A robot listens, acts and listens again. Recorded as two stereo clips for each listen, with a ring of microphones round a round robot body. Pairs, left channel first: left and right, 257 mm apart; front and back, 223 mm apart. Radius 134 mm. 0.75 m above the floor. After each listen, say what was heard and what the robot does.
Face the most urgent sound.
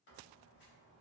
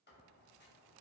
Keep listening.
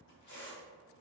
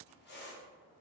Keep listening.
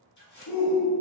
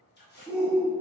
The shout: 80° left. Turn 80° left.
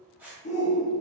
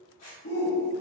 The shout is now 30° left. Turn 30° left.
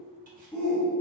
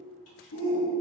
Found it: a shout, straight ahead, 1 to 2 m away.